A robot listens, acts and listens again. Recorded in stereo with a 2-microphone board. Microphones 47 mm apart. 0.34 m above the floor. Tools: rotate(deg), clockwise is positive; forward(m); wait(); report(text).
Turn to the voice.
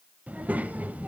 rotate(35)
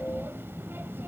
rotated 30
rotate(105)
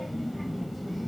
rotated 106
report("Found it: a child speaking, straight ahead.")